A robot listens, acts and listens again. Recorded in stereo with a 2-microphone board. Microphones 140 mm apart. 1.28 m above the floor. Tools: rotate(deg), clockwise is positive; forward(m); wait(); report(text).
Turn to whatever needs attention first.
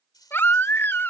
rotate(-30)
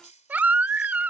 rotate(15)
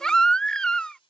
report("Facing the baby crying.")